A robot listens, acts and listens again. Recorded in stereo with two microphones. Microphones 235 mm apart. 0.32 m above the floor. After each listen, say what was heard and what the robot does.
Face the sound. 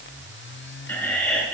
Turn 30° left.
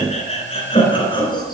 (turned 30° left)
So it is at 160° left. Turn 160° left.
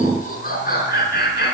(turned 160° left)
The laughter is now 45° left. Turn 45° left.
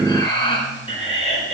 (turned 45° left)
The laughter is now 30° left. Turn 30° left.
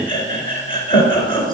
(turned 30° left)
The laughter is now 20° left. Turn 20° left.
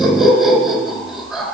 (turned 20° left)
Facing the laughter.